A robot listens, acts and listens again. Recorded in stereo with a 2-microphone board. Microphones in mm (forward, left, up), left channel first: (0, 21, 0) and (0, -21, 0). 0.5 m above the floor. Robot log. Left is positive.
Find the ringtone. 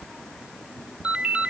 note: The ringtone: about 25° right or 155° right.
cmd yaw -25
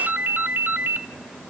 note: So it is at 125° right.
cmd yaw -125
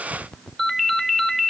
end: Found it: a ringtone, straight ahead, under 1 m away.